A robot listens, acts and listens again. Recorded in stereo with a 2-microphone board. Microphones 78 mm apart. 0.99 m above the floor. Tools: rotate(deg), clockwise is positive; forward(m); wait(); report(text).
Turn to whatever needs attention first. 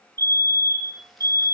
rotate(55)
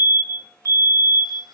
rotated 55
rotate(55)
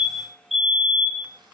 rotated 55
report("Facing the fire alarm, 2 to 4 m away.")